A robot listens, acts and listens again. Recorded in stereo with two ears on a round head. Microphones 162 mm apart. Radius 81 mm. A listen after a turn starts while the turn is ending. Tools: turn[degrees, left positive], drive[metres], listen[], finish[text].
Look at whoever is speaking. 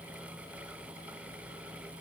Action: listen[]
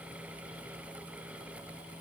Action: listen[]
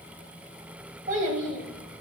Thought: The child speaking: about 45° right or 135° right.
Action: turn[-45]
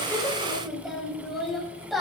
Action: finish[Found it: a child speaking, straight ahead.]